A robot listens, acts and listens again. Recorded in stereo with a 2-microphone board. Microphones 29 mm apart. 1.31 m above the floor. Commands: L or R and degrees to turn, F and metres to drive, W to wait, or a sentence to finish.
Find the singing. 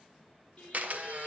L35
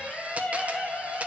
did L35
L95
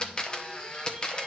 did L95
W
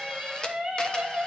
R30
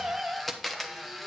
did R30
R15
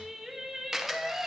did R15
Facing the singing, 1 to 2 m away.